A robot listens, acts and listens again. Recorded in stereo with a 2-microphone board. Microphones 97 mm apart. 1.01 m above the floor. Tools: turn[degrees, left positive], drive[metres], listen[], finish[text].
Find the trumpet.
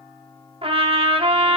Thought: The trumpet: about 70° right or 110° right.
Action: turn[-70]
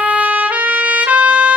Thought: So it is at 15° right.
Action: turn[-15]
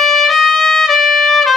Action: finish[Facing the trumpet, under 1 m away.]